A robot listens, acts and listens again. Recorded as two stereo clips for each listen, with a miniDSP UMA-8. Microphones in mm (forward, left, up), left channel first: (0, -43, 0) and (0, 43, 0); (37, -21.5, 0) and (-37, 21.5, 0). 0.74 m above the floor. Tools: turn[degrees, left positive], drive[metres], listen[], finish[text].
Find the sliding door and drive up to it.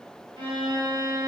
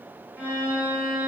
Action: listen[]
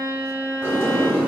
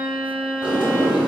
Thought: The sliding door: 150° left.
Action: turn[150]
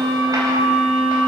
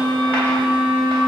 Action: listen[]
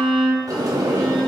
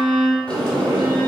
Thought: The sliding door is now 45° left.
Action: turn[45]
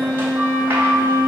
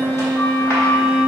Thought: The sliding door is now 25° left.
Action: turn[25]
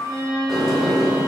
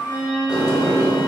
Action: drive[1.0]
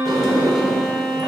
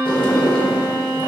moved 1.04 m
Action: drive[1.0]
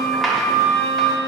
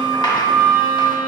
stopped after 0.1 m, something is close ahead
Action: finish[Arrived at the sliding door, straight ahead.]